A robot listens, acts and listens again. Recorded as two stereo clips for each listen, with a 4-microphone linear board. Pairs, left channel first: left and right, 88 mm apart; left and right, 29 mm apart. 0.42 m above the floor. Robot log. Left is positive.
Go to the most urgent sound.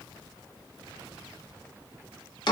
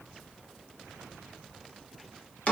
cmd idle
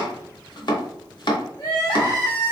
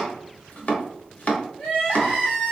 note: The crying: about 50° left or 130° left.
cmd yaw +50
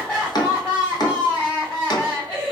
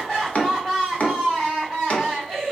note: So it is at 15° left.
cmd yaw +15
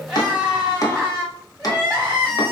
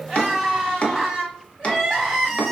cmd fwd 1.0
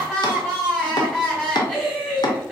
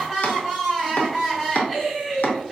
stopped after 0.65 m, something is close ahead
end: I am next to the crying.